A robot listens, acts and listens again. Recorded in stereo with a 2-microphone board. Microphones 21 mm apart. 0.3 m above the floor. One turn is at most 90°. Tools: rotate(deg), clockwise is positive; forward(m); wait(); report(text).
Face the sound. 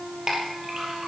rotate(30)
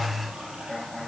wait()
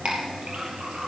rotate(90)
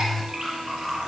rotate(25)
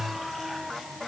wait()
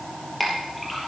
report("Facing the clink, over 4 m away.")